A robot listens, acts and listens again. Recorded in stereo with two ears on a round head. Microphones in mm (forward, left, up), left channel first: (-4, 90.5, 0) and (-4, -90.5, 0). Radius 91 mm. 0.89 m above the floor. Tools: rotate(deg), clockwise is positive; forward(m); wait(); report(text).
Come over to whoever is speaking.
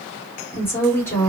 rotate(-30)
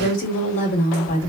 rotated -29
rotate(-140)
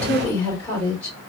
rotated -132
rotate(-10)
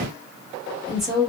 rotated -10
forward(1.0)
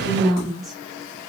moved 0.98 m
forward(1.0)
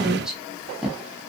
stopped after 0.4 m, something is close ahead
report("I am next to the woman speaking.")